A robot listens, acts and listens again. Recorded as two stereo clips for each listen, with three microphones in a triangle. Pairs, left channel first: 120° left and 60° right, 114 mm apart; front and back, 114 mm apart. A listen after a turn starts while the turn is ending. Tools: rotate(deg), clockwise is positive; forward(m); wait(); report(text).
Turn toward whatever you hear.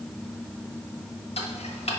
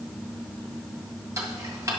rotate(-120)
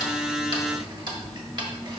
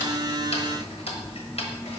rotate(15)
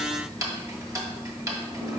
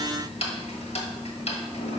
report("Facing the ticking.")